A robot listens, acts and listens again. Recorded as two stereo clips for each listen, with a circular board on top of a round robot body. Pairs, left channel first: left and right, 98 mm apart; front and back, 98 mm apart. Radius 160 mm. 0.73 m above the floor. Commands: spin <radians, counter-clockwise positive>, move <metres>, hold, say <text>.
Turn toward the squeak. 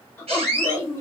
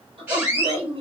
spin -1.92
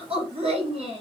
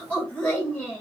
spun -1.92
hold
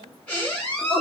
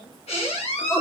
spin 0.26
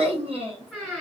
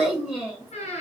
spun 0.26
say Facing the squeak.